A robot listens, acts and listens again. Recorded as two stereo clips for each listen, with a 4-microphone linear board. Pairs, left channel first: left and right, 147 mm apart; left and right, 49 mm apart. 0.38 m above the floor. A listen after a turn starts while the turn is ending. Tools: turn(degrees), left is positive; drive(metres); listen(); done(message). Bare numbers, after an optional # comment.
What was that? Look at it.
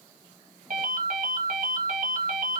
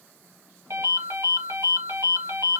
# The ringtone: about 70° right or 110° right.
turn(-70)
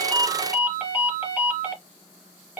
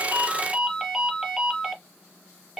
# So it is at 10° right.
turn(-10)
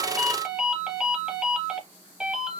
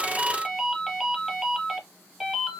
done("Found it: a ringtone, straight ahead, 1 to 2 m away.")